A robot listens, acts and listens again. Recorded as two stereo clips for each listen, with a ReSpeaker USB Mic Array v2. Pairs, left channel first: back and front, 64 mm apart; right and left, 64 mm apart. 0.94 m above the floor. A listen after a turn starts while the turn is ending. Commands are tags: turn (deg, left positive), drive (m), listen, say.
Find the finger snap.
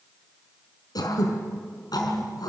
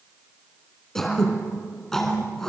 <listen/>
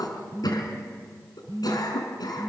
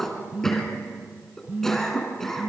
<listen/>
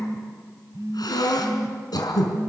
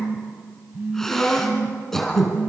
<say>I can't make out a finger snap, only throat clearing and a phone buzzing.</say>